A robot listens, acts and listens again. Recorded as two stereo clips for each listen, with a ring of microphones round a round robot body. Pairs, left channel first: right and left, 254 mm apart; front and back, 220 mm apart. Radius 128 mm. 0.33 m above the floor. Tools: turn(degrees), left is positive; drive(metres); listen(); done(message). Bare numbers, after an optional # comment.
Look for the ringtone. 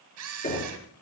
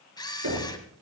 listen()
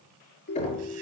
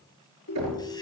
# The ringtone: 40° right.
turn(-40)
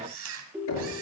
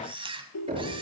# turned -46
done("Found it: a ringtone, straight ahead, 2 to 4 m away.")